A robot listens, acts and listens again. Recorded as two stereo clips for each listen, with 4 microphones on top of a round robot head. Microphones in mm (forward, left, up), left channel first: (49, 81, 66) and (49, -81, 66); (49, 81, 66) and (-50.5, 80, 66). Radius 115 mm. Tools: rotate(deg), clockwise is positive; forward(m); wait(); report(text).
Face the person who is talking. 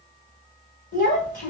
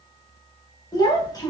rotate(-60)
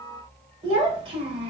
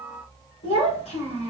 rotate(25)
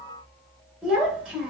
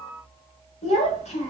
report("Found it: a child speaking, straight ahead, 1 to 2 m away.")